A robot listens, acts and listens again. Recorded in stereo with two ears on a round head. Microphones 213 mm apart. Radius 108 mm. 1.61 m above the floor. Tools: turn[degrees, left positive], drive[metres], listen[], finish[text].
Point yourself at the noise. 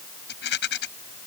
Thought: The rattle: about 45° left or 135° left.
Action: turn[45]
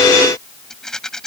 Action: finish[Found it: a rattle, straight ahead.]